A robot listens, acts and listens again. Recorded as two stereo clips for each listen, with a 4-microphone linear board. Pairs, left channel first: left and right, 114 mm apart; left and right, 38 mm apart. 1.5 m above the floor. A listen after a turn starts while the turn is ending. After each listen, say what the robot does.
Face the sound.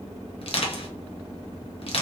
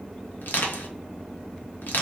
Turn 55° left.
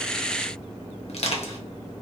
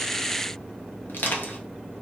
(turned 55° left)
Turn 65° left.
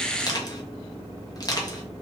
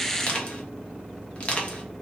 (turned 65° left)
Turn 35° left.
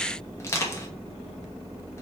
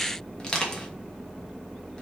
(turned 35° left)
Turn 25° left.
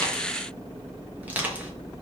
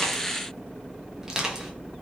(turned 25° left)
Turn 15° right.
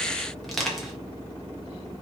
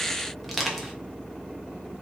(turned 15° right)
Found it: crushing, straight ahead.